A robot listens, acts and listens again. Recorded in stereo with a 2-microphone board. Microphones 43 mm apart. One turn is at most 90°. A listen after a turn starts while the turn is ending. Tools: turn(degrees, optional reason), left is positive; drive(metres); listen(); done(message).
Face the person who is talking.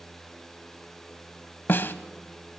listen()
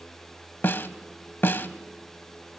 listen()
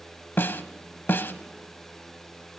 done("I can't make out anyone speaking to turn to.")